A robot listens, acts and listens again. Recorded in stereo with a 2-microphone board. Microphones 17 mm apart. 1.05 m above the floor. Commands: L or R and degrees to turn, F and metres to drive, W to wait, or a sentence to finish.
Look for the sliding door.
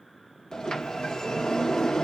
L45
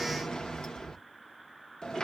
L75
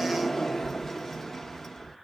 L30
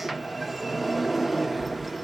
Found it: a sliding door, straight ahead.